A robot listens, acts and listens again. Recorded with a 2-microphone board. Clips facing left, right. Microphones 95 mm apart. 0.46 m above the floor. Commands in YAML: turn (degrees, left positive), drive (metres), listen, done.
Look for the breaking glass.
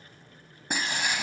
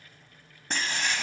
turn: 30
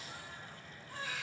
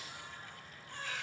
listen: true
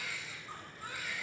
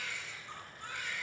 done: "I heard breaking glass, but can't make it out now. It was about 20° right or 140° left."